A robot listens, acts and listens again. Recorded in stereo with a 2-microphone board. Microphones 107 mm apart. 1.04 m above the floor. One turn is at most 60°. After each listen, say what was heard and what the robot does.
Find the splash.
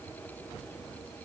Keep listening.
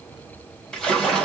Turn 30° left.
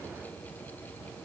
Keep listening.
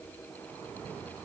I heard a splash, but can't make it out now. It was about 20° right or 140° left.